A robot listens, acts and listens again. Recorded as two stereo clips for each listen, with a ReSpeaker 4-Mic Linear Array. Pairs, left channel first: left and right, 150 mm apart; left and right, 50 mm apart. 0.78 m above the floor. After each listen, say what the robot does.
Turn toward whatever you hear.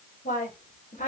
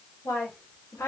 Turn 65° left.
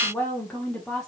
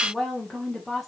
Found it: a woman speaking, straight ahead.